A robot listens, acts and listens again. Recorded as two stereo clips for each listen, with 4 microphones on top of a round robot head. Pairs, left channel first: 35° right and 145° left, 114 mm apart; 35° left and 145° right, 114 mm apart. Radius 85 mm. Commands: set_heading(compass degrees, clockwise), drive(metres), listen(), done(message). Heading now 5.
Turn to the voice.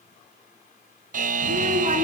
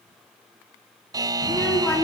set_heading(250)
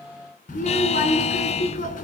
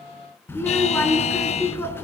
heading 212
set_heading(247)
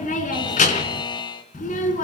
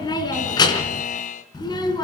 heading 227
set_heading(247)
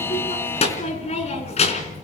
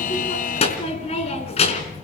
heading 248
done("Facing the child speaking, 2 to 4 m away.")